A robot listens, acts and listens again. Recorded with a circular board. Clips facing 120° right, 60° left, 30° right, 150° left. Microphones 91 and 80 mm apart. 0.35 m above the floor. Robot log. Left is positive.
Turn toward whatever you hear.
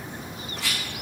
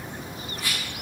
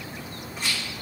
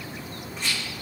note: The rattle: 115° right.
cmd yaw -115
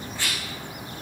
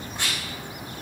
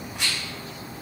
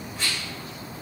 note: The rattle is now 10° right.
cmd yaw -10
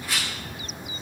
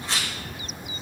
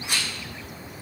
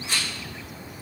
end: Found it: a rattle, straight ahead, 2 to 4 m away.